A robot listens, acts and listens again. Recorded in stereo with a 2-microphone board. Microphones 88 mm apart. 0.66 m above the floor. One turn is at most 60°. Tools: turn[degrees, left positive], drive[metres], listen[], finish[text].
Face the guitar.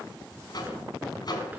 Action: listen[]
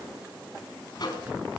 Action: listen[]
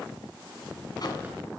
Action: finish[I can't make out a guitar to turn to.]